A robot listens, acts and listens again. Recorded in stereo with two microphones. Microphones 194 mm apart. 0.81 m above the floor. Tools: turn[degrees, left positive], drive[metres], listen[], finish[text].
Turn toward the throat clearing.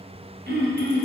Thought: The throat clearing: about 65° right or 115° right.
Action: turn[-65]
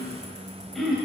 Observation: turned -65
Action: finish[Found it: throat clearing, straight ahead.]